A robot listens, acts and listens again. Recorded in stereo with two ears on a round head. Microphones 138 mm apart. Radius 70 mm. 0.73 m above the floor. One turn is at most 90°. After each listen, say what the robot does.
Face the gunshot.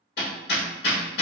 Keep listening.
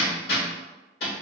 Keep listening.
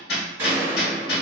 Turn 20° right.
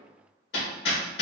Keep listening.
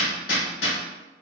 I heard a gunshot, but can't make it out now. It was about straight ahead or 140° right.